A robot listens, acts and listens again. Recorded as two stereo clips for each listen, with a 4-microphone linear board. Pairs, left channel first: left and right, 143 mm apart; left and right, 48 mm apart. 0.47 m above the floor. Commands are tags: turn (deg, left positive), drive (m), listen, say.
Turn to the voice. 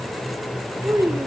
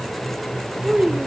<turn deg="-20"/>
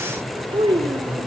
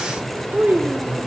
<turn deg="-135"/>
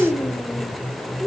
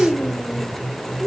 <say>Found it: a child speaking, straight ahead.</say>